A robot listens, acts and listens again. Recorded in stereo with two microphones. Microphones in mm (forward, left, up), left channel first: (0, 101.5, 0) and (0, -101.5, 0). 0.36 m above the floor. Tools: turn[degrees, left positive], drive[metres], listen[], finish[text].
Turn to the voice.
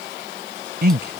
Thought: The man speaking: about 55° right or 125° right.
Action: turn[-55]
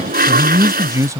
Thought: So it is at 20° right.
Action: turn[-20]
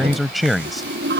Action: finish[Found it: a man speaking, straight ahead.]